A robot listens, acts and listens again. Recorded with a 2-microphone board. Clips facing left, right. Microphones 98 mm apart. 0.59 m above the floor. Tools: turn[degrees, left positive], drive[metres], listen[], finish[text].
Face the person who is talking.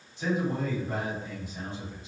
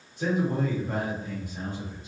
Thought: The man speaking: about 60° right or 120° right.
Action: turn[-60]
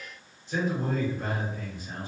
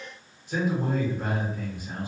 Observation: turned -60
Thought: So it is at 15° right.
Action: turn[-15]
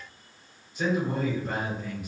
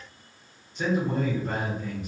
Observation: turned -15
Action: finish[Found it: a man speaking, straight ahead.]